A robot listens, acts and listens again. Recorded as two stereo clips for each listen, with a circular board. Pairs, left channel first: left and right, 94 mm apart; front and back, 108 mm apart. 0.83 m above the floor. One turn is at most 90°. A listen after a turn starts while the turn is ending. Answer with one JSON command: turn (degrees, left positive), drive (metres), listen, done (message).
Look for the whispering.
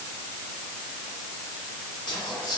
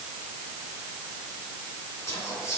{"turn": 60}
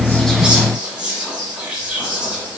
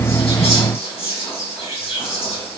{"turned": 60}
{"turn": -15}
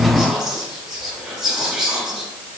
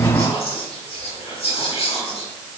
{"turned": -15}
{"done": "Facing the whispering."}